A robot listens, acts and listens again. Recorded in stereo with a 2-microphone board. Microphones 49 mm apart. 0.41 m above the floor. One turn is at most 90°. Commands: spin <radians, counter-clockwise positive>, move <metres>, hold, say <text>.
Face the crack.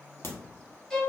spin 0.96
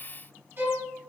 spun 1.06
hold
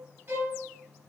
say I heard a crack, but can't make it out now. It was about 5° right or 65° left.